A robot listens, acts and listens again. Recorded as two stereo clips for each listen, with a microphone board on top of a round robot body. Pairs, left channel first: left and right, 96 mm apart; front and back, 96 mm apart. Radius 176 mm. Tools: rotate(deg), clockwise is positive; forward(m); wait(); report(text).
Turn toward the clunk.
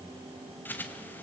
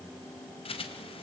wait()
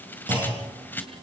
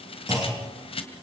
rotate(125)
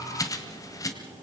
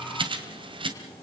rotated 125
report("Facing where the clunk came from. I can't hear it now.")